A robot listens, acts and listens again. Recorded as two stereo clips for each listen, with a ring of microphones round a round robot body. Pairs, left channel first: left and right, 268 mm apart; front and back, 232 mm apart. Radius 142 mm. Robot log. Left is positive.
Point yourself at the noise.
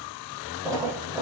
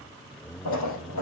note: The splash: 10° right.
cmd yaw -10
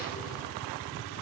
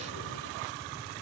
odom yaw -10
end: I heard a splash from this way, but can't make it out now.